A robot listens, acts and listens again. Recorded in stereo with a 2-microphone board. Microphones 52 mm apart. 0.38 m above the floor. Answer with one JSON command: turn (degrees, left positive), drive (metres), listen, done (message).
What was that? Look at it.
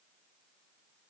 {"listen": true}
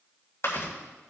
{"turn": 65}
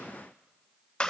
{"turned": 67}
{"turn": 20}
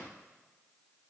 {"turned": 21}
{"listen": true}
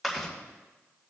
{"done": "Found it: chewing, straight ahead."}